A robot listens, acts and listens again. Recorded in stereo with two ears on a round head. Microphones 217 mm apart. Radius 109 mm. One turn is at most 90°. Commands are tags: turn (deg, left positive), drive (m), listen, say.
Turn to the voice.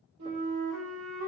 <listen/>
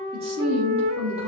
<turn deg="-25"/>
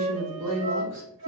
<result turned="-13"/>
<turn deg="-90"/>
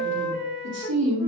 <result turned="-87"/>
<turn deg="-55"/>
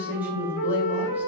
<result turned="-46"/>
<turn deg="-10"/>
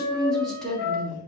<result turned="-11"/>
<say>Facing the woman speaking.</say>